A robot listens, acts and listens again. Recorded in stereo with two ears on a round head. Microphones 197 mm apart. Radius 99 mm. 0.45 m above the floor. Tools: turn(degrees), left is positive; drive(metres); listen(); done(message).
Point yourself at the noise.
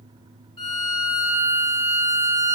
turn(degrees=20)
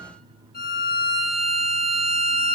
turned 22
turn(degrees=135)
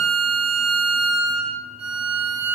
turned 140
done("Facing the violin, 2 to 4 m away.")